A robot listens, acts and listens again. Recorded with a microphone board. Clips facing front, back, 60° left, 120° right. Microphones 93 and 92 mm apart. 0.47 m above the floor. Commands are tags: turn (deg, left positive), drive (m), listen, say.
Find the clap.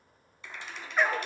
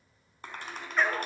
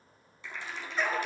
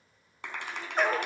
<turn deg="-140"/>
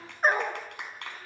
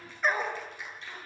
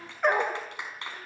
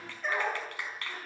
<turn deg="-10"/>
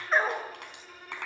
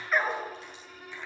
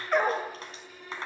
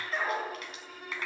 <say>Found it: a clap, straight ahead, over 4 m away.</say>